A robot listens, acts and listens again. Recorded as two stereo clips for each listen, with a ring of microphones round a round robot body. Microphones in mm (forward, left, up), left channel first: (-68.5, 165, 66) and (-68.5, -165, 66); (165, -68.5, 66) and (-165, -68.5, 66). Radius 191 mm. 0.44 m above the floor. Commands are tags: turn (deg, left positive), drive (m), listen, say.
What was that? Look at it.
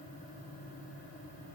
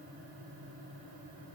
<listen/>
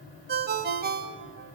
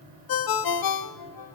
<turn deg="-25"/>
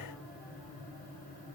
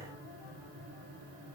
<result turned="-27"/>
<listen/>
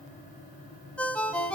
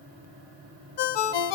<say>Found it: a ringtone, straight ahead, 1 to 2 m away.</say>